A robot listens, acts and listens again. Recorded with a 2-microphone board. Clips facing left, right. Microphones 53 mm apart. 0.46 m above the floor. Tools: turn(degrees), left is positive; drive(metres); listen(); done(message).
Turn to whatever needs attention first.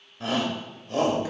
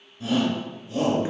turn(degrees=55)
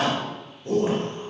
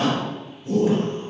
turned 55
turn(degrees=60)
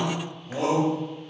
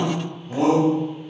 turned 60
done("Facing the shout, 1 to 2 m away.")